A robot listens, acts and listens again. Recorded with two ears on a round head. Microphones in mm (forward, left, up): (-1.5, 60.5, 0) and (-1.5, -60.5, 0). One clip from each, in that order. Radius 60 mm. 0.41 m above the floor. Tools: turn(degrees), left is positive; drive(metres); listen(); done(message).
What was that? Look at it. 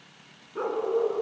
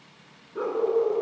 turn(degrees=15)
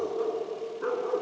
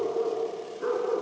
turn(degrees=20)
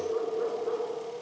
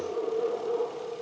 turn(degrees=30)
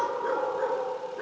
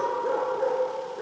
turn(degrees=130)
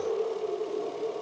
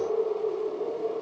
turn(degrees=25)
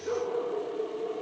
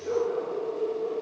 turn(degrees=25)
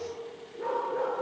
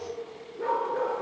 turn(degrees=-15)
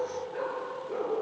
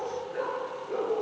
done("Found it: a dog barking, straight ahead.")